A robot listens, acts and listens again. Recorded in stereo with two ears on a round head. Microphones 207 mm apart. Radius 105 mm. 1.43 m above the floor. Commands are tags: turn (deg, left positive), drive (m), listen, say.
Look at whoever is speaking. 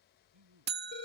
<turn deg="-90"/>
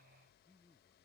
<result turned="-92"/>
<say>Found it: a man speaking, straight ahead.</say>